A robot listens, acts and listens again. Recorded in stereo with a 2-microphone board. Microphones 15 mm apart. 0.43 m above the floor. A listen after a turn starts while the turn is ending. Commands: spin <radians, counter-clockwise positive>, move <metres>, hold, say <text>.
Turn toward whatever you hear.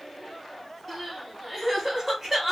spin -0.44
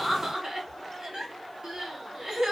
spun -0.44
spin -2.27
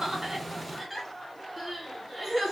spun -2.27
say Facing the crying, 1 to 2 m away.